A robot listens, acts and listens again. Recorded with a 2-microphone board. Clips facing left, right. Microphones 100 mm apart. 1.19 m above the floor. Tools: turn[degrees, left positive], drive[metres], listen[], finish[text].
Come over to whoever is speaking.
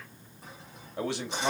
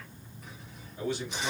Action: turn[90]
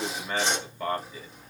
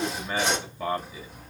Action: drive[1.0]
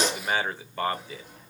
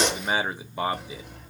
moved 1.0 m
Thought: The man speaking is now 15° right.
Action: turn[-15]
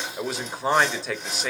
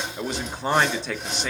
Action: drive[1.0]
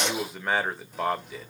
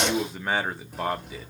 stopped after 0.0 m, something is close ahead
Action: finish[Arrived at the man speaking, straight ahead.]